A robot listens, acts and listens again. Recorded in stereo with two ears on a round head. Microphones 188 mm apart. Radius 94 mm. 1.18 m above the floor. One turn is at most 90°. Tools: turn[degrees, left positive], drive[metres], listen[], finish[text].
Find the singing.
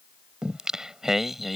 Action: turn[30]
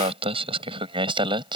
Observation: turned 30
Thought: So it is at 25° right.
Action: turn[-25]
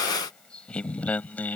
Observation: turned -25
Thought: The singing is now 10° left.
Action: turn[10]
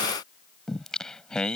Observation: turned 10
Action: finish[Facing the singing.]